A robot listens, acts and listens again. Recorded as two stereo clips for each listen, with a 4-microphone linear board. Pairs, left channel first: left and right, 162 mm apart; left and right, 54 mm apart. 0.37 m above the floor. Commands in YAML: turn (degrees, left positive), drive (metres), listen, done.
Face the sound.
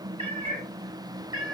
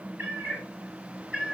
turn: -25
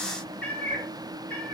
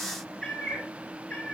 turn: 15
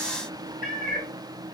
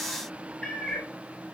done: "Found it: a cat meowing, straight ahead, 2 to 4 m away."